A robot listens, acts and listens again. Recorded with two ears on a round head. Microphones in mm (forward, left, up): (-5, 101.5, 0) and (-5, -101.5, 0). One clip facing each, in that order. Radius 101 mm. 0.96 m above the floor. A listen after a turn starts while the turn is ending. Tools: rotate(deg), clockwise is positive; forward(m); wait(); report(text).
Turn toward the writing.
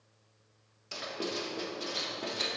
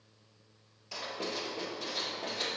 rotate(-20)
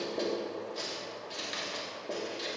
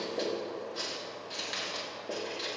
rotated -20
report("Facing the writing, 1 to 2 m away.")